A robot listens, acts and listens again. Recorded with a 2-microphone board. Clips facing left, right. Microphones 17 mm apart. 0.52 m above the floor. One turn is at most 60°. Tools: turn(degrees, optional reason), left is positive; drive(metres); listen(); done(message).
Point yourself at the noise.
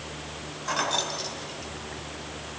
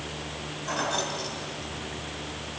turn(degrees=30)
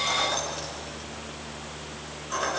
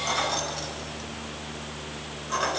turn(degrees=-35, reason="So it is at 35° right.")
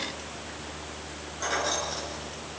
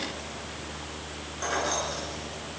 done("Facing the keys jangling.")